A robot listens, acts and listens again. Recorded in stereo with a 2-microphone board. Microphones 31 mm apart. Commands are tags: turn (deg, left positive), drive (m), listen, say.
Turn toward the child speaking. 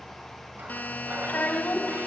<turn deg="65"/>
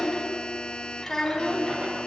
<turn deg="15"/>
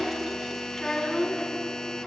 <turn deg="10"/>
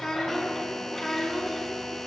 <turn deg="10"/>
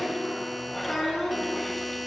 <say>Facing the child speaking.</say>